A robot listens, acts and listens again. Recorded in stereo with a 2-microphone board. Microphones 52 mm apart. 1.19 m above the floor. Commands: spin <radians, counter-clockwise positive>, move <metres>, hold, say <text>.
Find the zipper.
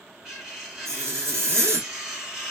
spin -1.05
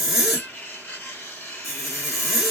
say Found it: a zipper, straight ahead.